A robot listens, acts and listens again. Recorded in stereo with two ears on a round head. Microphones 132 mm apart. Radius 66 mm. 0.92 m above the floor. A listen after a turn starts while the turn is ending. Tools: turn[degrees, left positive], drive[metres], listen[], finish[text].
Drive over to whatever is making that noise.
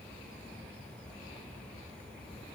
Action: listen[]
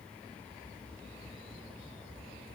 Action: listen[]
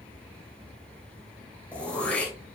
Action: turn[30]
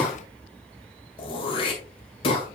Thought: So it is at 140° left.
Action: turn[140]
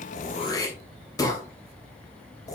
Thought: The throat clearing is now 25° left.
Action: turn[25]
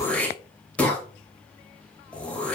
Thought: The throat clearing is now 10° left.
Action: turn[10]
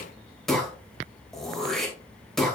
Action: drive[1.0]
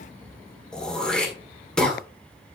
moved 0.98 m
Action: drive[1.0]
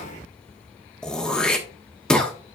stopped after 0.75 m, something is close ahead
Action: finish[Arrived at the throat clearing, straight ahead.]